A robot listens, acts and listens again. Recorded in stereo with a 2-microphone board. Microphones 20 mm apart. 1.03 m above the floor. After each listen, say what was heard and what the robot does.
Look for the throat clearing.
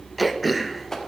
Turn 30° right.
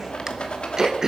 So it is at 145° right. Turn 145° right.
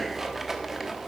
Keep listening.
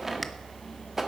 Keep listening.
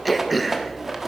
Found it: throat clearing, straight ahead.